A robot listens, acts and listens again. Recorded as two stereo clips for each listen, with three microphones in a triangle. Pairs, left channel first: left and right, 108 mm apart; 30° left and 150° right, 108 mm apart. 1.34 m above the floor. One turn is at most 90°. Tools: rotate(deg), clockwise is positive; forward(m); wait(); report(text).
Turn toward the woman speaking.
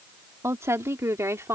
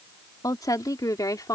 rotate(25)
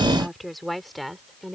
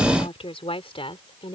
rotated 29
report("Found it: a woman speaking, straight ahead.")